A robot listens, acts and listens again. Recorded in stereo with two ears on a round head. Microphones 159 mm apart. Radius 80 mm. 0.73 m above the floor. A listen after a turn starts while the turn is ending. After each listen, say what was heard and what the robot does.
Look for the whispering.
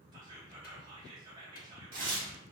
The whispering: about 25° right or 155° right. Turn 25° right.
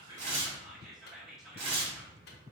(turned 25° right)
Found it: whispering, straight ahead, 1 to 2 m away.